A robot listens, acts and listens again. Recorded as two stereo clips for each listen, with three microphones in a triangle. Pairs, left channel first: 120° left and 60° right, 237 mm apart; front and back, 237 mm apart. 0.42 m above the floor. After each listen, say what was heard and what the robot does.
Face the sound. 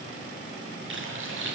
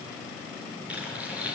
The frying: 95° right. Turn 95° right.
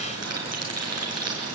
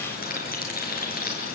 The frying is now 55° right. Turn 55° right.
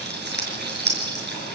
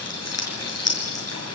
The frying is now 10° right. Turn 10° right.
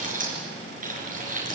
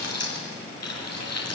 Found it: frying, straight ahead, over 4 m away.